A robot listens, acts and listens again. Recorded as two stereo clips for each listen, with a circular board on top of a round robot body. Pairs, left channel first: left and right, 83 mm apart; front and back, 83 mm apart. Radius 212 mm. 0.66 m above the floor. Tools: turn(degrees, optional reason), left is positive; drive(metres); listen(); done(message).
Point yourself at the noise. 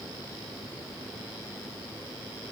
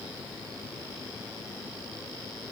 listen()
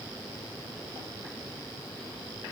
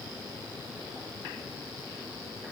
listen()
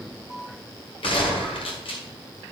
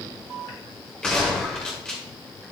turn(degrees=80, reason="The gunshot: 80° left.")
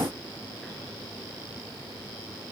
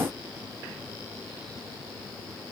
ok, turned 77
done("I heard a gunshot from this way, but can't make it out now.")